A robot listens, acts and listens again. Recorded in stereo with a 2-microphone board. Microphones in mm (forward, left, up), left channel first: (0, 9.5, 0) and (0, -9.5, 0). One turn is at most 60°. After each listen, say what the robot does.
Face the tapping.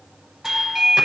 Keep listening.
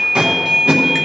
Keep listening.
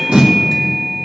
I can't make out tapping to turn to.